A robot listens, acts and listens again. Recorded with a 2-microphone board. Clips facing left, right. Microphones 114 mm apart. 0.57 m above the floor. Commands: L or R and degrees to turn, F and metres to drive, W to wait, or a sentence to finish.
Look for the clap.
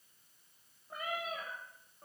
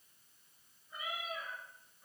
W
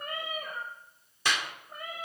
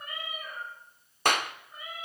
R50
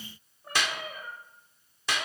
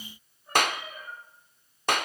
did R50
R65
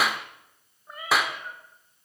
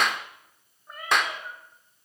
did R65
Facing the clap.